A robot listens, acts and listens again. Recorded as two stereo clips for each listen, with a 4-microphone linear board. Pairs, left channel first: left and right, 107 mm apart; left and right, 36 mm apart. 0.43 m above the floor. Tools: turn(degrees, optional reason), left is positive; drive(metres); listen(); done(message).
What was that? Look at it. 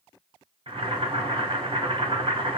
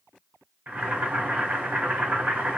turn(degrees=-60, reason="The boiling: about 60° right or 120° right.")
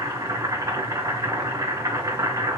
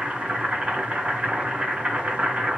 turn(degrees=-40, reason="So it is at 40° right.")
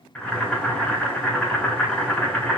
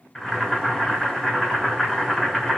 turn(degrees=15, reason="The boiling is now 15° left.")
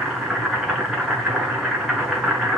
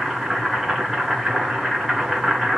done("Facing the boiling, 2 to 4 m away.")